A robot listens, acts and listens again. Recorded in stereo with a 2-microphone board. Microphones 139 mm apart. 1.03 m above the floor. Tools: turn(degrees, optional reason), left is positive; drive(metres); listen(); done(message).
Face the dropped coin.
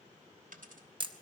turn(degrees=-75, reason="The dropped coin: about 75° right or 105° right.")
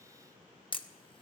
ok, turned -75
listen()
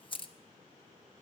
done("I heard a dropped coin, but can't make it out now. It was about straight ahead or 30° right.")